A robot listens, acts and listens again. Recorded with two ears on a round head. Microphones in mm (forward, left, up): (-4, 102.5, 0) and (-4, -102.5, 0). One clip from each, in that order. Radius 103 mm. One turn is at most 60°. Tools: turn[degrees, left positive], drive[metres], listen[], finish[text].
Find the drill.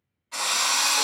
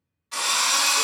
Thought: The drill: about 50° right or 130° right.
Action: turn[-50]
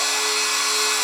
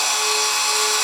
Thought: So it is at 75° right.
Action: turn[-60]
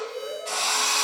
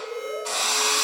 Thought: The drill is now 50° right.
Action: turn[-50]
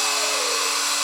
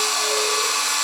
Action: finish[Facing the drill.]